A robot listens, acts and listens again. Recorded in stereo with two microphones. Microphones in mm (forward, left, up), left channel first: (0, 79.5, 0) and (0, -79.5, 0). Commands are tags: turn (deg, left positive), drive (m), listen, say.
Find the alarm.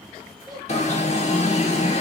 <turn deg="45"/>
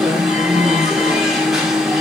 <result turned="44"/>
<say>Facing the alarm, under 1 m away.</say>